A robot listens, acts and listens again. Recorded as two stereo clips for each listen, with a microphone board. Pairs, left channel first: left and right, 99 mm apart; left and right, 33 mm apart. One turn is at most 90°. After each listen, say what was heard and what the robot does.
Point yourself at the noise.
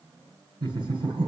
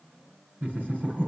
The laughter: about 50° right or 130° right. Turn 50° right.
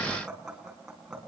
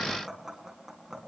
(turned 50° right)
Facing the laughter, over 4 m away.